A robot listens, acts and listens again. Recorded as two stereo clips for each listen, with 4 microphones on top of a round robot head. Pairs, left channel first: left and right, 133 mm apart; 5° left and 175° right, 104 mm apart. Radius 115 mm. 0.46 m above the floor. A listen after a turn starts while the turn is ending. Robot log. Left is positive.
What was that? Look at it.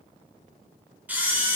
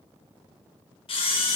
note: The camera shutter: 15° right.
cmd yaw -15
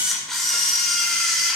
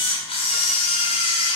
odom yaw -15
end: Found it: a camera shutter, straight ahead, 1 to 2 m away.